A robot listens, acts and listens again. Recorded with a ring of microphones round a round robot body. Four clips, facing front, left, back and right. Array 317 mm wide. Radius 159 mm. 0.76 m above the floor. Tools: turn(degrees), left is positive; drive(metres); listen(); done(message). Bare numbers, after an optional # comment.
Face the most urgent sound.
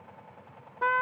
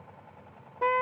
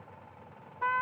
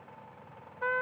listen()
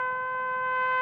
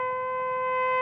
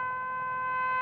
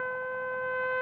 listen()
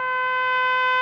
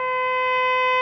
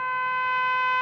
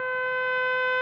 done("I can't make out anything urgent to turn to.")